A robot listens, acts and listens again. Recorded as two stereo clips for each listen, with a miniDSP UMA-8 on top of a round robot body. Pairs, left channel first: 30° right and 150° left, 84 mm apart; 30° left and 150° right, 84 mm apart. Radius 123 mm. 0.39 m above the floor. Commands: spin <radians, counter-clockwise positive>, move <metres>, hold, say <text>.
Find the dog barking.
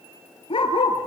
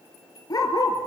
spin -0.26
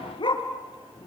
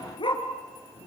say Facing the dog barking, 2 to 4 m away.